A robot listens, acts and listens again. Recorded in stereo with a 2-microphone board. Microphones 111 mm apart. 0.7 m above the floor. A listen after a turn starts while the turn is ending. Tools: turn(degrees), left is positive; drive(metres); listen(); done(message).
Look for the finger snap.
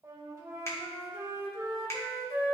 turn(degrees=25)
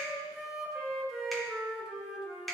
done("Facing the finger snap.")